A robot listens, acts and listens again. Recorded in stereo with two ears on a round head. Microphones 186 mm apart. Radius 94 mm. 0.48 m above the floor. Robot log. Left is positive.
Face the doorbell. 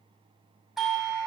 cmd yaw +30
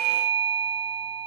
note: So it is at 30° right.
cmd yaw -30
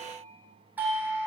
note: The doorbell is now 10° right.
cmd yaw -10
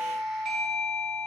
end: Found it: a doorbell, straight ahead.